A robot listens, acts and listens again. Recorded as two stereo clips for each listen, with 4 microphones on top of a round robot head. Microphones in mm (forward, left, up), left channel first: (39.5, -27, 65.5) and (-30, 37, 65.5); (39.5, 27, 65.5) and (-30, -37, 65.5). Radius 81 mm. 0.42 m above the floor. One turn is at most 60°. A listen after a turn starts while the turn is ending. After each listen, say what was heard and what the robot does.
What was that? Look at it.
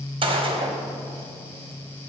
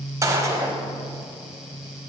The gunshot: 165° left. Turn 60° left.
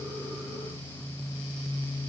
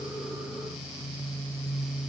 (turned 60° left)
Nothing new. It was at 105° left. Turn 60° left.
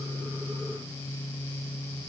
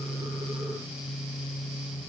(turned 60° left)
Nothing new. It was at 45° left. Turn 45° left.
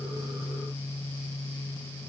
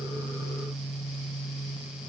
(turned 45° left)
Facing where the gunshot came from. I can't hear it now.